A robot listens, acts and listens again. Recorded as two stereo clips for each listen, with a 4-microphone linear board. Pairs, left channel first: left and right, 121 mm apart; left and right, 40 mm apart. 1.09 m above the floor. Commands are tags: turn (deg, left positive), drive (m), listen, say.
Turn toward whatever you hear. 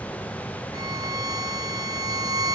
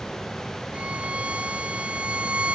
<turn deg="-35"/>
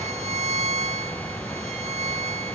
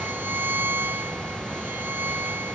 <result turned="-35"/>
<turn deg="-110"/>
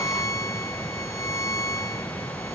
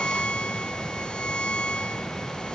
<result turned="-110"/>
<turn deg="25"/>
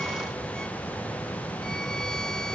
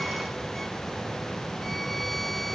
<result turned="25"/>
<listen/>
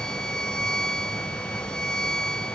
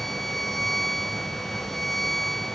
<say>Facing the violin.</say>